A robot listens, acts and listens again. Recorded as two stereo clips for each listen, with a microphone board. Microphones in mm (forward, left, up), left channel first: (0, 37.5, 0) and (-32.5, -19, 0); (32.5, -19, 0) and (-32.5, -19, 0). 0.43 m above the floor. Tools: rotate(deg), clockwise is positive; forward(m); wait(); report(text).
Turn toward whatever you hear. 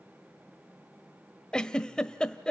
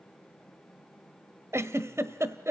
rotate(-140)
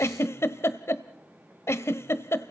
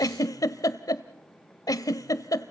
rotate(-15)
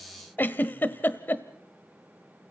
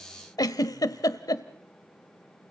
report("Found it: a giggle, straight ahead.")